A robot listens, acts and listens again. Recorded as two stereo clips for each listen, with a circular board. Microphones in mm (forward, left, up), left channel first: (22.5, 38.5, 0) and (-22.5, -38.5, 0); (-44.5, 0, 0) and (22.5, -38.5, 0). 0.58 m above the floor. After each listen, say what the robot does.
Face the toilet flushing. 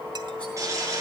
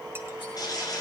Turn 175° right.
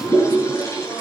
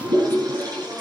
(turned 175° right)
Found it: a toilet flushing, straight ahead.